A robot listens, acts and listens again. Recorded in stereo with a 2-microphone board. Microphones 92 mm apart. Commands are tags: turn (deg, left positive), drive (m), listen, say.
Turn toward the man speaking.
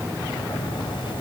<listen/>
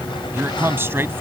<turn deg="-25"/>
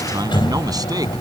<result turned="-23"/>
<listen/>
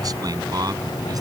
<turn deg="-135"/>
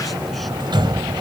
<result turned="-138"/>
<listen/>
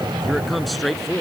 <say>Facing the man speaking.</say>